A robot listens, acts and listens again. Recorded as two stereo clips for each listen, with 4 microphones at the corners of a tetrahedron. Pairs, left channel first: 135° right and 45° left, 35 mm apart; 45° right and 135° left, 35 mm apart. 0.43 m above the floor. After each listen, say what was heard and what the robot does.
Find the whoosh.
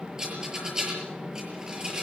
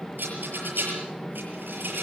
Keep listening.
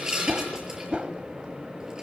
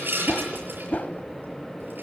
The whoosh: 15° right. Turn 15° right.
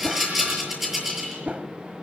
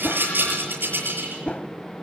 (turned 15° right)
Found it: a whoosh, straight ahead.